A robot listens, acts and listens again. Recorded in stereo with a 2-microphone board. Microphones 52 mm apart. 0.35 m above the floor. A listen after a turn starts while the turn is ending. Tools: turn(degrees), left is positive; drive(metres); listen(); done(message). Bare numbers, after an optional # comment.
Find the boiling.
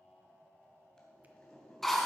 turn(30)
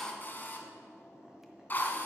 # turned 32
# So it is at 15° right.
turn(-15)
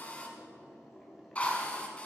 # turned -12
done("Found it: boiling, straight ahead.")